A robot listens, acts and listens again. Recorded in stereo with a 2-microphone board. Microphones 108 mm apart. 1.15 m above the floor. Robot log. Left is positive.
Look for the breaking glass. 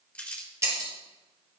note: The breaking glass: about 25° right or 155° right.
cmd yaw -25
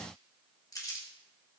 cmd idle
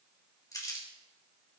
end: I heard breaking glass, but can't make it out now. It was about straight ahead or 130° right.